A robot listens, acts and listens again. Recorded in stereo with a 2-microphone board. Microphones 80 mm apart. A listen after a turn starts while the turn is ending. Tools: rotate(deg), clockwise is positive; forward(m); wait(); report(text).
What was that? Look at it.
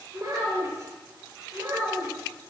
rotate(35)
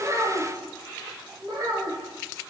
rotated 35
rotate(125)
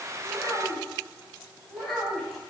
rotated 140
report("Found it: a child speaking, straight ahead, 2 to 4 m away.")